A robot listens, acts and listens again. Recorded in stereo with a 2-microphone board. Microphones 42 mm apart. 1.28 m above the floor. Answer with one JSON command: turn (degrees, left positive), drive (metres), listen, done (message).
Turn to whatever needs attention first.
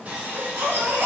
{"turn": -90}
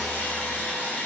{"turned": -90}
{"listen": true}
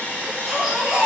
{"turn": -10}
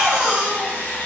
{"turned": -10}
{"done": "Found it: a baby crying, straight ahead."}